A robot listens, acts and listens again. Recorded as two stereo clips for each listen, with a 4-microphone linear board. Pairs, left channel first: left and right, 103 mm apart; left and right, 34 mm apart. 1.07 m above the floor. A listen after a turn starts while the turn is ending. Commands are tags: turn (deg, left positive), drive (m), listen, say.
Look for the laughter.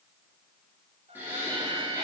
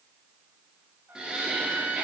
<turn deg="-30"/>
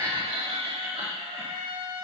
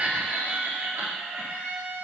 <turn deg="-105"/>
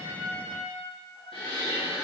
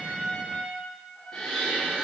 <turn deg="15"/>
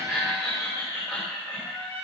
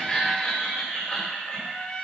<turn deg="10"/>
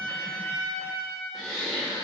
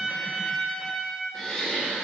<say>Facing the laughter, 2 to 4 m away.</say>